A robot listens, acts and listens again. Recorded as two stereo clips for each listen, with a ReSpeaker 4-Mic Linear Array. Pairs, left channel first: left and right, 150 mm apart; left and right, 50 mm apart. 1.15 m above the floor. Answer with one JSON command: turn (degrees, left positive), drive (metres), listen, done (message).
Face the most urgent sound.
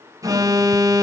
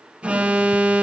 {"turn": -25}
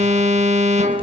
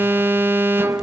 {"turn": -130}
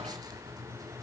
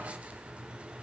{"listen": true}
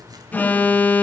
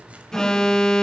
{"turn": 10}
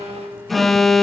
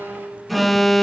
{"done": "Facing the alarm, under 1 m away."}